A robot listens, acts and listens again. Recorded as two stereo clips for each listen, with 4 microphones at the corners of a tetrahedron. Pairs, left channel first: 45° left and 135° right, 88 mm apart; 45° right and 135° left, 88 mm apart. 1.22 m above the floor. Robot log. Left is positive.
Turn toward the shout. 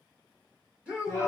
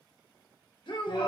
note: The shout: 60° right.
cmd yaw -60
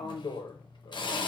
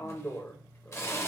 cmd idle
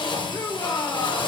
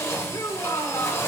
note: The shout is now 20° right.
cmd yaw -20
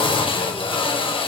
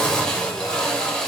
cmd idle
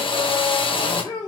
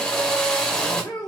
end: Found it: a shout, straight ahead, 1 to 2 m away.